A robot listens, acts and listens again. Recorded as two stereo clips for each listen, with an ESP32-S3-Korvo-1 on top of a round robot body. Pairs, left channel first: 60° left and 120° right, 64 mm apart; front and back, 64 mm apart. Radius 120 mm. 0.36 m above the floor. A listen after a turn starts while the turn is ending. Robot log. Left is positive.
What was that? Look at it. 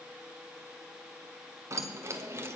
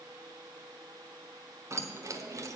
note: The keys jangling: 165° right.
cmd yaw -165
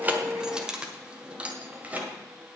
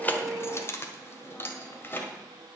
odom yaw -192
note: The keys jangling is now 55° right.
cmd yaw -55
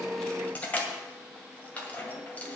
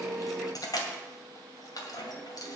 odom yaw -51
end: Found it: keys jangling, straight ahead, 2 to 4 m away.